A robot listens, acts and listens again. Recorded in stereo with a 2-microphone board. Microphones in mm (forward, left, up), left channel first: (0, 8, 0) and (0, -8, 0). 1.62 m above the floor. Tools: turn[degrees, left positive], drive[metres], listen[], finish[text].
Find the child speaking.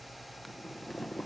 Action: listen[]
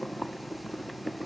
Action: listen[]
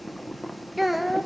Action: turn[-30]
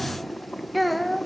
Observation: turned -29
Action: turn[30]
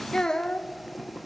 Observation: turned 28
Thought: So it is at 135° left.
Action: turn[135]
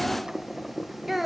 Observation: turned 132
Thought: The child speaking is now 10° right.
Action: turn[-10]
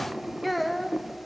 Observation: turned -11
Action: finish[Found it: a child speaking, straight ahead.]